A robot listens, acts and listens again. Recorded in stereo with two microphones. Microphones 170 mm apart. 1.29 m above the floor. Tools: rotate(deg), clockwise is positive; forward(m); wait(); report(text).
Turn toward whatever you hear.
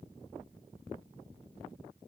wait()
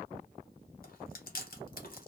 rotate(-60)
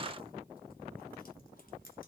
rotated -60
wait()
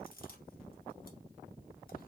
rotate(-60)
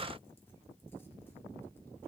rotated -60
wait()
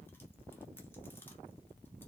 wait()
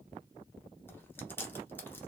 rotate(-10)
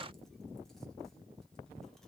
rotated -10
wait()
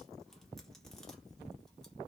wait()
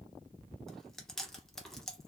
report("Facing the chewing.")